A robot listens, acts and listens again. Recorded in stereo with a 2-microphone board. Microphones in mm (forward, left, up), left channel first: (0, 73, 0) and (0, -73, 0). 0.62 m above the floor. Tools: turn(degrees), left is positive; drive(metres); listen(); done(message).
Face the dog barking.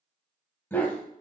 turn(degrees=30)
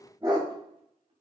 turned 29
turn(degrees=-30)
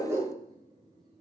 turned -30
turn(degrees=-20)
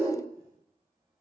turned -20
turn(degrees=-15)
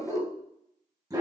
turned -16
turn(degrees=-25)
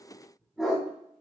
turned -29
done("Found it: a dog barking, straight ahead.")